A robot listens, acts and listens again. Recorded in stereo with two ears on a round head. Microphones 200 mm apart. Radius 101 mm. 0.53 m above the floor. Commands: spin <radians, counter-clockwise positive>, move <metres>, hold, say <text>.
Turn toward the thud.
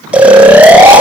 hold
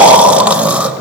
hold
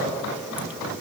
say I can't make out a thud, only snoring.